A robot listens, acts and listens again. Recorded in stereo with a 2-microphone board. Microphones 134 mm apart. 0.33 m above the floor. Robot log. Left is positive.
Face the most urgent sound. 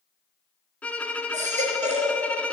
note: The baby crying: about 60° right or 120° right.
cmd yaw -60
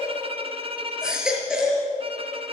end: Facing the baby crying, over 4 m away.